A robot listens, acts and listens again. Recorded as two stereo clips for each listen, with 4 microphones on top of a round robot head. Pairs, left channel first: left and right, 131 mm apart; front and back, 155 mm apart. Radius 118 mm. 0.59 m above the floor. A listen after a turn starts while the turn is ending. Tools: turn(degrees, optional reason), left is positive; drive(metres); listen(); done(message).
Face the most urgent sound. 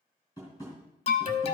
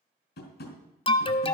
turn(degrees=50, reason="The alarm: 50° left.")
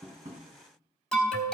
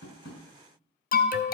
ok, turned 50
done("Found it: an alarm, straight ahead, under 1 m away.")